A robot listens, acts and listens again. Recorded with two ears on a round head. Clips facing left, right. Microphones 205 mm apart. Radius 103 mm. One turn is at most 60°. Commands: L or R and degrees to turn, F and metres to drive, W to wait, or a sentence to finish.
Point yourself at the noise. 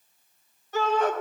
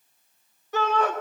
R60
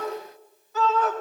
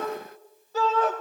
R30
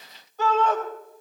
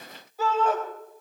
R10
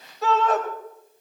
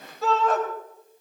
Found it: a shout, straight ahead.